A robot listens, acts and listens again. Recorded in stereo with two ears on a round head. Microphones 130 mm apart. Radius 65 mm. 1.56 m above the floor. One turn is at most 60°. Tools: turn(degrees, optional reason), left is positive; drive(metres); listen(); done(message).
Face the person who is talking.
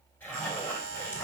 listen()
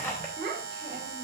turn(degrees=-45, reason="The child speaking: about 45° right or 135° right.")
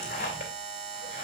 listen()
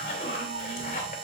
listen()
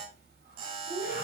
turn(degrees=-60, reason="So it is at 90° right.")
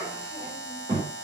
turn(degrees=-30, reason="The child speaking is now 30° right.")
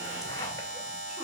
listen()
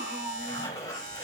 done("Found it: a child speaking, straight ahead, over 4 m away.")